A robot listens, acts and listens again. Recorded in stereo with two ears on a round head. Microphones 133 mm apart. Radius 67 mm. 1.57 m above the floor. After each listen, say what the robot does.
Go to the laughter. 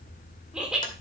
Turn 30° right.
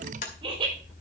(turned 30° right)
Turn 145° right.
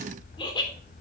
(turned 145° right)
Turn 30° left.
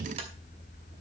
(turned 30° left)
Keep listening.
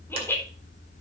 Turn 15° left.
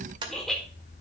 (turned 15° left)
Drive 1.0 m forward.
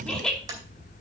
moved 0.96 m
Drive 1.0 m forward.
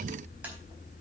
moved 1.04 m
Keep listening.
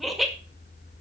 Drive 1.0 m forward.
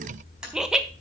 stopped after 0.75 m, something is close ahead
Arrived at the laughter, straight ahead.